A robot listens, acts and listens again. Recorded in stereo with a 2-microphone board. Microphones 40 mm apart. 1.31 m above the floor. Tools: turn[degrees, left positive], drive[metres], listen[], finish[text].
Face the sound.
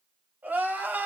Thought: The crying: about 50° right or 130° right.
Action: turn[-50]
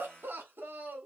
Thought: So it is at 75° right.
Action: turn[-75]
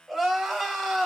Thought: The crying is now 10° right.
Action: turn[-10]
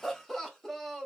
Action: finish[Found it: crying, straight ahead.]